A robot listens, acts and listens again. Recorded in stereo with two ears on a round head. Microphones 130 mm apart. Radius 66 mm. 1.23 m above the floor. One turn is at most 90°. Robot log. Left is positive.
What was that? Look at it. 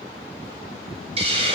note: The hiss: about 40° right or 140° right.
cmd yaw -40
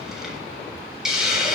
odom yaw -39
end: Found it: a hiss, straight ahead, 2 to 4 m away.